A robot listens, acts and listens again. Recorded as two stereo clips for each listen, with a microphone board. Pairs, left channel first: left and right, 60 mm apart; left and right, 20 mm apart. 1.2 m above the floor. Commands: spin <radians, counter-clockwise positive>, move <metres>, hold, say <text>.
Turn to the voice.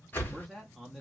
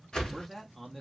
spin 0.52
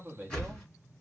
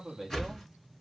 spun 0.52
spin -0.52
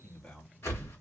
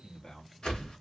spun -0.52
spin 0.35
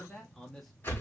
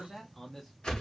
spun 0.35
say Facing the man speaking, under 1 m away.